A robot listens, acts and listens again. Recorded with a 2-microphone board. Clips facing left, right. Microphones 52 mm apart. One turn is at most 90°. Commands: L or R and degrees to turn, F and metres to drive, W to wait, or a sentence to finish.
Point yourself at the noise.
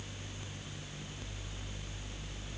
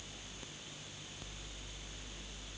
W
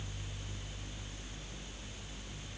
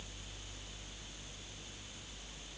W
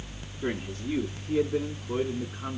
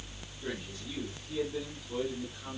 L50
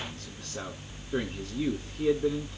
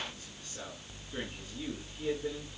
L80
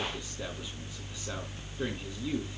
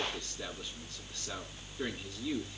W
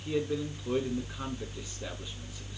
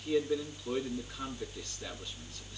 L10
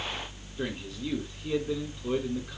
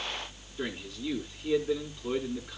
Facing the man speaking, over 4 m away.